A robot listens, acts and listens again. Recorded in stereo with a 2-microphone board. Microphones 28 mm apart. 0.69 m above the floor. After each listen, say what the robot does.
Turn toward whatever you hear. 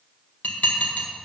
Turn 90° left.
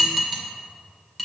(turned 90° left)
Turn 10° right.
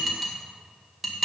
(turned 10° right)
Found it: dishes clattering, straight ahead, 1 to 2 m away.